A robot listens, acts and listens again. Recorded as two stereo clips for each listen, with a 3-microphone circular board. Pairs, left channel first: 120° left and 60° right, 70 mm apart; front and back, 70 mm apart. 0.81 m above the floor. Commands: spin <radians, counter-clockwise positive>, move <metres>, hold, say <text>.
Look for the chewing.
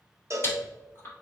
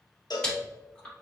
spin 1.31
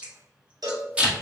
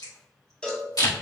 spin 0.17
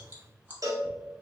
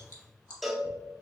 hold
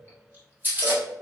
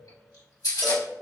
say Found it: chewing, straight ahead, 1 to 2 m away.